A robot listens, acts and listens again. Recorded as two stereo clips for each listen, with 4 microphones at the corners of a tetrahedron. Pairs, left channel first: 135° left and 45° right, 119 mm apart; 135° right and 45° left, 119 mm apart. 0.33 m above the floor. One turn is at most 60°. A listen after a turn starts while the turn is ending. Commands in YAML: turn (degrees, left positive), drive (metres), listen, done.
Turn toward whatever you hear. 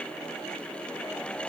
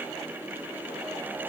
listen: true
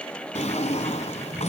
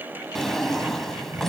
turn: 60
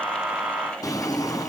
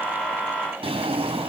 turn: 60
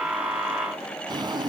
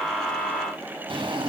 done: "Facing the drawer."